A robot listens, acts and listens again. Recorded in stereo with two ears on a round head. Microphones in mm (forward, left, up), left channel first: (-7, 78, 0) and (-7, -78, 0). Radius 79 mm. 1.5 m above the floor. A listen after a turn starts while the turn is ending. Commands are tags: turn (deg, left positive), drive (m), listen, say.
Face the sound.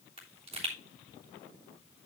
<turn deg="-40"/>
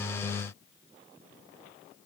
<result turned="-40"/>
<listen/>
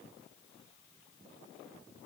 <say>I heard a pop, but can't make it out now. It was about straight ahead or 100° right.</say>